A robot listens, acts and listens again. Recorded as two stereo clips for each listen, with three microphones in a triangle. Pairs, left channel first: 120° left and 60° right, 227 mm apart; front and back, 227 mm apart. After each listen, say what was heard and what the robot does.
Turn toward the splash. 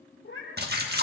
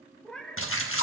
The splash: 15° right. Turn 15° right.
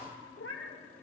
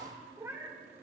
I heard a splash from this way, but can't make it out now.